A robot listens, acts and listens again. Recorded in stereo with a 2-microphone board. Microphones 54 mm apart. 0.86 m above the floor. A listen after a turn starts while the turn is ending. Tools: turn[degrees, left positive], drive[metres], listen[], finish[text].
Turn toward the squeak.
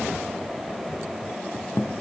Thought: The squeak: about 55° left or 125° left.
Action: turn[55]
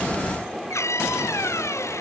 Thought: So it is at 70° left.
Action: turn[70]
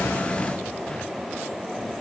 Action: listen[]
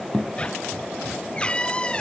Thought: The squeak is now 20° left.
Action: turn[20]
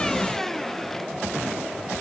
Action: listen[]
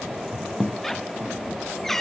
Action: finish[Found it: a squeak, straight ahead.]